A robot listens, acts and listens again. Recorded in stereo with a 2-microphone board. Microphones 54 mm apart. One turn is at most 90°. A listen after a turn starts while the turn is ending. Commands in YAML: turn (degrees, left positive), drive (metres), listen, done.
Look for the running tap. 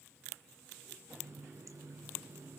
turn: -70
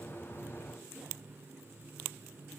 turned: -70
turn: -35
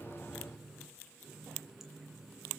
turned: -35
done: "Found it: a running tap, straight ahead."